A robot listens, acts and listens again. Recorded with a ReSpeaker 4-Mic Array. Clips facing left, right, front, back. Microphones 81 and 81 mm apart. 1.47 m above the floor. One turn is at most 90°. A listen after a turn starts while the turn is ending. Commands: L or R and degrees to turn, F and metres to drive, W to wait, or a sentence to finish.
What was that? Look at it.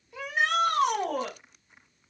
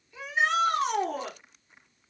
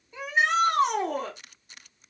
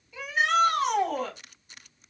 L65
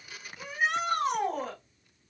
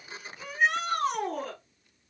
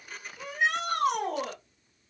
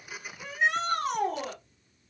Facing the shout.